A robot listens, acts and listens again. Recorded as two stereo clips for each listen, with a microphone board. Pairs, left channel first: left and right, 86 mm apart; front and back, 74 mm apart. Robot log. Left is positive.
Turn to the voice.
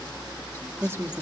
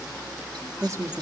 note: The woman speaking: 145° right.
cmd yaw -145
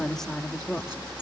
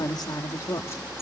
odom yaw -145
end: Found it: a woman speaking, straight ahead.